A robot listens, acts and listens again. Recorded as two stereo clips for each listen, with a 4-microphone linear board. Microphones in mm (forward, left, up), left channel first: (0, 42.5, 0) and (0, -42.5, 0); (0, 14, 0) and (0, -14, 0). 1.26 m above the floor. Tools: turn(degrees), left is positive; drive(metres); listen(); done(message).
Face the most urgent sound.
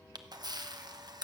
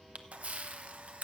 listen()
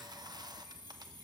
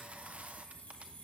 listen()
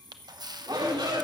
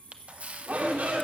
turn(degrees=-65)
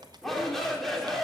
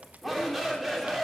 done("Found it: a shout, straight ahead, 2 to 4 m away.")